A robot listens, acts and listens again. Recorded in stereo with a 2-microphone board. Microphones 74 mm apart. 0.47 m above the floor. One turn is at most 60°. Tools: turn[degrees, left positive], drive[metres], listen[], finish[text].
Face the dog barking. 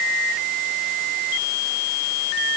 Action: listen[]
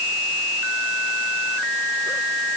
Action: listen[]
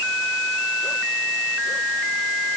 Action: finish[I can't make out a dog barking.]